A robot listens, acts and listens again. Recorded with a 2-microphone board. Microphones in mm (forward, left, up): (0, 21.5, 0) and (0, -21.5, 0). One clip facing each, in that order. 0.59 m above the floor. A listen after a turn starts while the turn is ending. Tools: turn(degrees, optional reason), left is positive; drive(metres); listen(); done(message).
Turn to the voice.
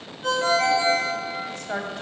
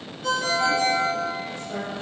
turn(degrees=90)
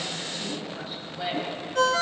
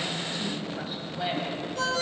done("Facing the woman speaking, 2 to 4 m away.")